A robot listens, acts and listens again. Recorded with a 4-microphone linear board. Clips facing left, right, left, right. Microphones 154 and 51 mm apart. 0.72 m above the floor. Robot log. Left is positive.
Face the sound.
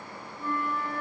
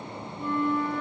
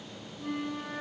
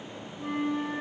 note: The flute: about 15° right or 165° right.
cmd yaw -15
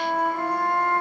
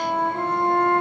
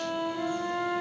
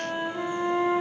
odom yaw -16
note: So it is at 145° right.
cmd yaw -145
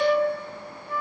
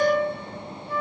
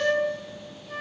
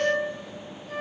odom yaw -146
end: Found it: a flute, straight ahead.